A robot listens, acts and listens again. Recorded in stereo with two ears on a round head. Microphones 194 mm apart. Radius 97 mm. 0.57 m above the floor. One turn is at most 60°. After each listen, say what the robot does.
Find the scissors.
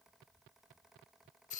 Keep listening.
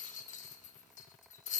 Keep listening.
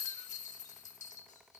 I can't make out scissors, only a rattle.